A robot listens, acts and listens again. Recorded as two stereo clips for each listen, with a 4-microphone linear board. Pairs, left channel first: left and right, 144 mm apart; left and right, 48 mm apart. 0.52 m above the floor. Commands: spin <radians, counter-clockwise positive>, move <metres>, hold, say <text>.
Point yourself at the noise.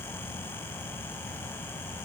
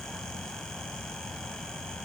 hold
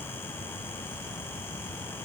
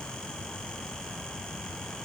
hold
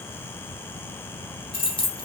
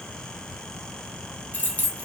spin 0.61
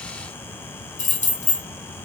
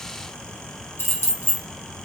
spin 1.75
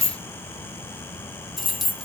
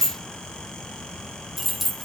say Facing the keys jangling.